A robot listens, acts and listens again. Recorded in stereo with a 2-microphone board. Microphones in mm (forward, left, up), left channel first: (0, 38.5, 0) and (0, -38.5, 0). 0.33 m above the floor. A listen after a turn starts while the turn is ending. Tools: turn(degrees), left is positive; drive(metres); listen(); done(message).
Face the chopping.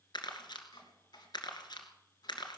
turn(degrees=65)
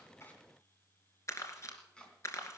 turn(degrees=10)
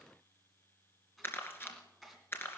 done("Found it: chopping, straight ahead.")